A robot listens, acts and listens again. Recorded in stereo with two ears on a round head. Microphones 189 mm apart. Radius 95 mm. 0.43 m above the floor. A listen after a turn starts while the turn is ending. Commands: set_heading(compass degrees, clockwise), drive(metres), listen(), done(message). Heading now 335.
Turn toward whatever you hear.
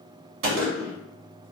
set_heading(45)
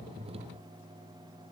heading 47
listen()
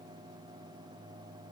done("I heard a gunshot, but can't make it out now. It was about straight ahead or 40° right.")